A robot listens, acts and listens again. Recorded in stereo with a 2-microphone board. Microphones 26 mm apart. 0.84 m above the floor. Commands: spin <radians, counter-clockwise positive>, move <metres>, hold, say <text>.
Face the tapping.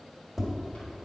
spin 0.52
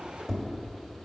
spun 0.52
spin 2.62
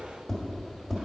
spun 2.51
say Facing the tapping.